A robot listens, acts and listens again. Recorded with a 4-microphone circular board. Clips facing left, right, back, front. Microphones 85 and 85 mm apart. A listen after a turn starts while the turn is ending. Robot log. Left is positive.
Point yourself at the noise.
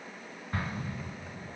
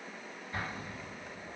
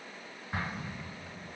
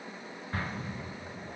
note: The explosion: 115° left.
cmd yaw +115
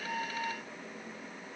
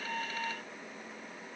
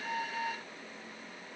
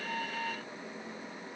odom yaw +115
end: Facing where the explosion came from. I can't hear it now.